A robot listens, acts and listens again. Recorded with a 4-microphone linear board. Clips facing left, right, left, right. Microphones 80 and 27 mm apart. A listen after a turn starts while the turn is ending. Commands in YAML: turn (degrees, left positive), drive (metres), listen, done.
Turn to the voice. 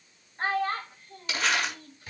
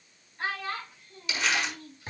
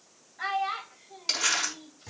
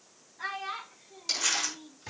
turn: 45
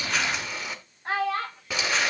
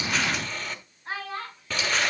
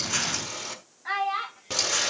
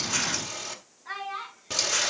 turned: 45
turn: 95
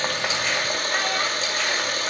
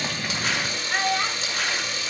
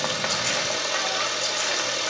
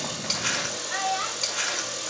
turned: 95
listen: true
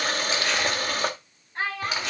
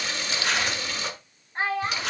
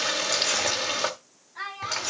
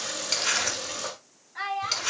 turn: -25
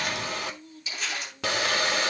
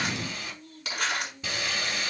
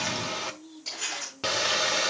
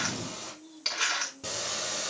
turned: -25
listen: true
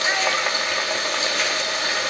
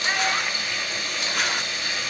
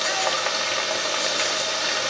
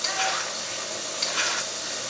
listen: true
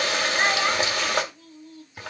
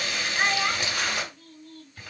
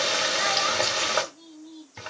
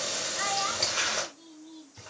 done: "Facing where the child speaking came from. I can't hear it now."